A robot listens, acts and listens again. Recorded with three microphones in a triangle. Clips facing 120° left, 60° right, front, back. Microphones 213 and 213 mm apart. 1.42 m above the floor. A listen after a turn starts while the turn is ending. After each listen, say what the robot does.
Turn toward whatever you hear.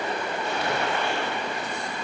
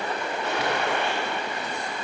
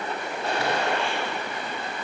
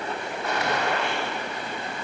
Turn 60° right.
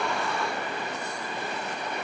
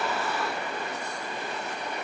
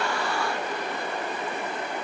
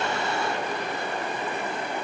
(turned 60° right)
Facing where the gunshot came from. I can't hear it now.